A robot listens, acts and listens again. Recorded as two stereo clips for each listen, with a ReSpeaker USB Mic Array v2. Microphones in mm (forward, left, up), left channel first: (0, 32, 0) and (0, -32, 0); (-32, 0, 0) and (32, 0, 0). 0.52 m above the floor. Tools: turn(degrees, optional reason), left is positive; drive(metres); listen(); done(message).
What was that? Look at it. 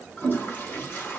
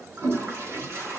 turn(degrees=40, reason="The toilet flushing: 40° left.")
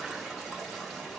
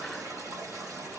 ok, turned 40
done("Facing the toilet flushing, 1 to 2 m away.")